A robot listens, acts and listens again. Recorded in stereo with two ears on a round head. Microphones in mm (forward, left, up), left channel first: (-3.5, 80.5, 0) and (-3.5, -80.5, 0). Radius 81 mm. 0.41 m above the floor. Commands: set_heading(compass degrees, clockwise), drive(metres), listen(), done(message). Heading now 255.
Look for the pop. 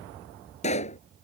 set_heading(215)
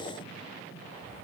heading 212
listen()
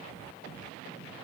done("I heard a pop, but can't make it out now. It was about 5° right or 100° left.")